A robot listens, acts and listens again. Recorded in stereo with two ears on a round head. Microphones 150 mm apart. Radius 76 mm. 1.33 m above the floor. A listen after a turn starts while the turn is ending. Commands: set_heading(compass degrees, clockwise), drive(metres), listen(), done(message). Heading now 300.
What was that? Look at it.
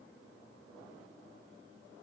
listen()
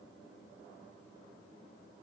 listen()
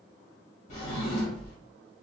set_heading(255)
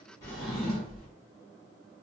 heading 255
done("Found it: a drawer, straight ahead.")